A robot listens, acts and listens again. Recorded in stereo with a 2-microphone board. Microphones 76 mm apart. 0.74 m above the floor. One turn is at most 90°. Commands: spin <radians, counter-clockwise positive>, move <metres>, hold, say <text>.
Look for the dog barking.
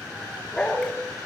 spin 0.52
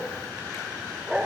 spin -0.26
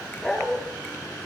say Facing the dog barking.